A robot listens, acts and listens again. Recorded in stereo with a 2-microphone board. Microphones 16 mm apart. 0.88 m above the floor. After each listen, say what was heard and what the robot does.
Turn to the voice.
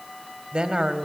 Turn 90° right.
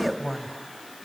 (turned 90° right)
So it is at 10° right. Turn 10° right.
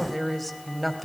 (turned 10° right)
Found it: a woman speaking, straight ahead.